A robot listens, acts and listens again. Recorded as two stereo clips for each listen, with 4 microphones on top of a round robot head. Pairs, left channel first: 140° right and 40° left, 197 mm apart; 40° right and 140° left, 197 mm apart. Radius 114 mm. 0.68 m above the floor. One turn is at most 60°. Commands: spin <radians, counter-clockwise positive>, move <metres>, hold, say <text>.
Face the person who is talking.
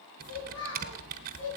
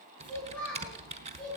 spin -1.05
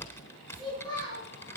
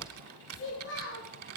spin -1.05
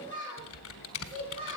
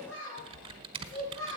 spin -0.26
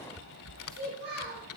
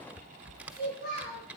say Facing the child speaking, over 4 m away.